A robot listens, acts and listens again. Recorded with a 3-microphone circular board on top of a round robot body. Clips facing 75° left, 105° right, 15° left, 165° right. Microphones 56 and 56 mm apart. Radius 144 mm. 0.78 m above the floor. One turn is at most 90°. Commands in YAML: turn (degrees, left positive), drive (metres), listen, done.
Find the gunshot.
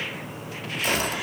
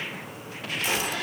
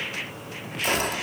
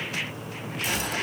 turn: 45
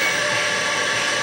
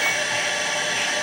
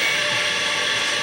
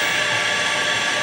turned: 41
done: "I heard a gunshot from this way, but can't make it out now."